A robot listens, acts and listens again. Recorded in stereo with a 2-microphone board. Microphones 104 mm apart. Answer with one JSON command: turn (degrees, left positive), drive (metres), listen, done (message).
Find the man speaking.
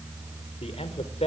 {"turn": 75}
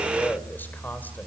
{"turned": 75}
{"turn": 15}
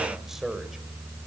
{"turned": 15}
{"done": "Found it: a man speaking, straight ahead, over 4 m away."}